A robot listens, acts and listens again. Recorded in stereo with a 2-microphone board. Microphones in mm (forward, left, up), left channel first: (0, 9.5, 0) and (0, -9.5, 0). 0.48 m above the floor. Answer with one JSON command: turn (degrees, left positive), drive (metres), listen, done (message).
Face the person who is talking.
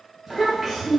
{"turn": -30}
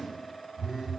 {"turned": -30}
{"listen": true}
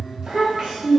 {"turn": -135}
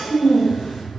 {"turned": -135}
{"turn": 10}
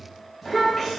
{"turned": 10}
{"done": "Found it: a child speaking, straight ahead."}